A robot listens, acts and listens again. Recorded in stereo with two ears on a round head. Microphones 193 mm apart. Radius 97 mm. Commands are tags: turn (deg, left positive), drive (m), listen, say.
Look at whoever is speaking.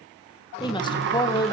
<turn deg="20"/>
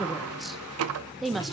<say>Found it: a woman speaking, straight ahead.</say>